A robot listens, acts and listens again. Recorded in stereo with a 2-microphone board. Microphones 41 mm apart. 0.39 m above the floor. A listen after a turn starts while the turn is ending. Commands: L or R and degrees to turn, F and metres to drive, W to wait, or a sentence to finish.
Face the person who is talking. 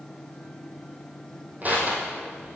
W
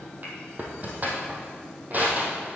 W
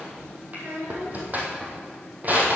R65
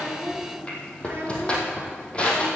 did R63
R50
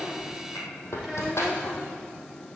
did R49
W
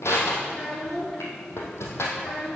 Facing the child speaking.